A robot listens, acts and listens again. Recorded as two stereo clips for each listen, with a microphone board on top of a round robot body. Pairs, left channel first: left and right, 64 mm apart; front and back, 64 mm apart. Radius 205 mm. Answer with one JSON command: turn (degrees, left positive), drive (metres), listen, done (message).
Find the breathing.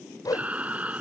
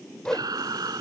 {"turn": -160}
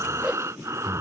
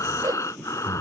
{"turn": -45}
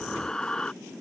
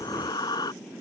{"turn": 10}
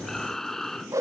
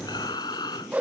{"done": "Facing the breathing."}